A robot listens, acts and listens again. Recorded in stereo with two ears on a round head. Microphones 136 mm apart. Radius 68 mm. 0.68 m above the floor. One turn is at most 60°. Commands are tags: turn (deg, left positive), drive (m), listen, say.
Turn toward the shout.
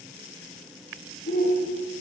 <turn deg="60"/>
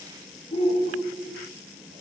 <turn deg="45"/>
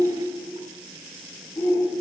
<turn deg="20"/>
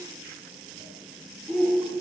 <say>Found it: a shout, straight ahead, 2 to 4 m away.</say>